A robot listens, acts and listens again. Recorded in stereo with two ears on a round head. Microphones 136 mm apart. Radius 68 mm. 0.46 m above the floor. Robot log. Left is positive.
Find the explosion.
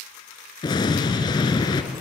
note: The explosion: about 30° left or 150° left.
cmd yaw +30
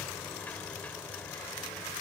cmd idle
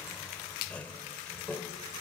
end: I heard an explosion, but can't make it out now. It was about straight ahead or 120° left.